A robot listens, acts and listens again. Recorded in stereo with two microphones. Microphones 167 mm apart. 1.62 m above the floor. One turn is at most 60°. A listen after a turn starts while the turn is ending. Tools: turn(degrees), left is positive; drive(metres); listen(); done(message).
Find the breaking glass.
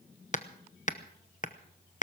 listen()
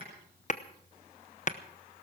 listen()
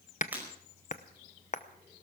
turn(degrees=-30)
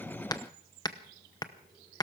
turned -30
listen()
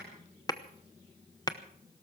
done("I heard breaking glass, but can't make it out now. It was about 20° left or 140° right.")